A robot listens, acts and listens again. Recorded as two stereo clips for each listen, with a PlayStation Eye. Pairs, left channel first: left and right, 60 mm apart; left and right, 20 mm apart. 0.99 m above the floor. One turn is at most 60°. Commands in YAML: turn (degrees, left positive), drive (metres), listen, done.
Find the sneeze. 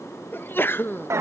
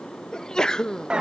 turn: 40
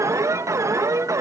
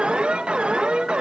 listen: true
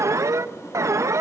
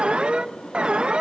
done: "I heard a sneeze, but can't make it out now. It was about straight ahead or 100° left."